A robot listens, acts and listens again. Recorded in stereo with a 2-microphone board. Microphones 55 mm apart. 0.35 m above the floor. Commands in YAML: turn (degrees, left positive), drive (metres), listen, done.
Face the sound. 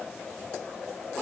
listen: true
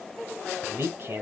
turn: -45
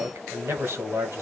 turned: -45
turn: -80
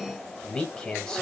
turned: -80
turn: 15
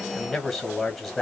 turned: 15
done: "Found it: a man speaking, straight ahead, 1 to 2 m away."